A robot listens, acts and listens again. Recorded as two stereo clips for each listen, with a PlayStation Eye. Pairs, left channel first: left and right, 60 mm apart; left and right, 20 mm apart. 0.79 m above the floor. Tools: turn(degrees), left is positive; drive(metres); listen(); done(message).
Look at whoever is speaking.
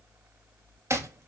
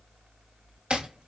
listen()
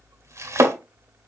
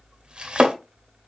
listen()
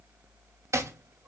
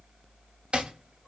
done("I can't make out anyone speaking, only chopping.")